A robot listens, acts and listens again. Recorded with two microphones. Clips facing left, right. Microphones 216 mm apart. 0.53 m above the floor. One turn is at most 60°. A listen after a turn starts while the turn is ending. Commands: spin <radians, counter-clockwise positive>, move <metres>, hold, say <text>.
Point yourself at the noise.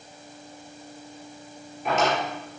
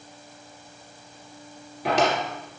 spin -1.05
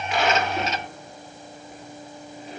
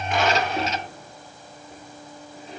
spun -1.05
spin -0.52
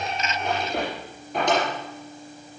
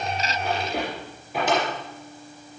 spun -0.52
say Found it: a drawer, straight ahead.